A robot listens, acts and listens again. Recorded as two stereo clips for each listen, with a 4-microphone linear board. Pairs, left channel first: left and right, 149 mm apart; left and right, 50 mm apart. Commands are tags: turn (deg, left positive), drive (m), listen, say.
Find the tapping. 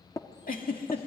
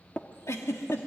<turn deg="20"/>
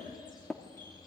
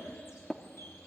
<say>Facing the tapping.</say>